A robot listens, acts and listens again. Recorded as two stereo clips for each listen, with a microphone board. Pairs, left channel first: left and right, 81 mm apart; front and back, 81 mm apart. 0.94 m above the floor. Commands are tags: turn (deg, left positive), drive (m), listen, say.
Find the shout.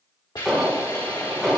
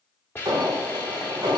<listen/>
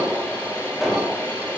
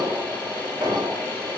<listen/>
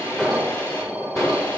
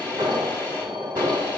<say>I can't make out a shout, only an alarm and a hiss.</say>